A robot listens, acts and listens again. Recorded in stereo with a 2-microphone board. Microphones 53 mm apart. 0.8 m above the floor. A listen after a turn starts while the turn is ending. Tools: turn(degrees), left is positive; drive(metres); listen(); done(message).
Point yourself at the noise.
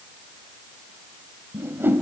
turn(degrees=-45)
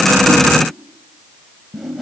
done("Facing the whoosh.")